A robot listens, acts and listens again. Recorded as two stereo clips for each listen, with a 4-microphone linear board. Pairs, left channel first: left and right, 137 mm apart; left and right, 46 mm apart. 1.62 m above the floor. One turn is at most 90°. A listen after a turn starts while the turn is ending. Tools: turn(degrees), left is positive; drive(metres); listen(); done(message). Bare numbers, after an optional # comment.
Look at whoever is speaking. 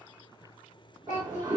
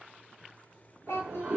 # The child speaking: about 70° left or 110° left.
turn(70)
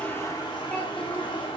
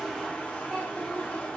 listen()
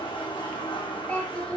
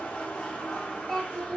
# So it is at 10° left.
turn(10)
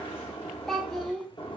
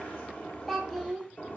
done("Facing the child speaking.")